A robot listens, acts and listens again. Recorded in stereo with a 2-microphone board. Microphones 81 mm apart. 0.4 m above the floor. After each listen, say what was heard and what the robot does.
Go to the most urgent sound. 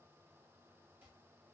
Keep listening.
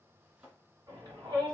The shout: about 55° right or 125° right. Turn 55° right.
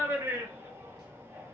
So it is at 50° right. Turn 50° right.
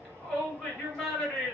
Drive 1.0 m forward.
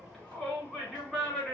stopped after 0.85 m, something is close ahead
Arrived at the shout, straight ahead.